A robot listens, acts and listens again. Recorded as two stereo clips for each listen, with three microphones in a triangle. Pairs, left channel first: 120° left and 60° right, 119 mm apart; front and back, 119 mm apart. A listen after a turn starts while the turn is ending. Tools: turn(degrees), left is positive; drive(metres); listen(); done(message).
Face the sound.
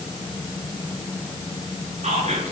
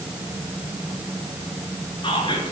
turn(degrees=-45)
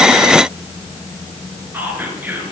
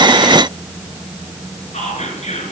turn(degrees=15)
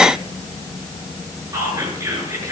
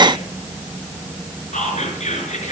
done("Found it: whispering, straight ahead.")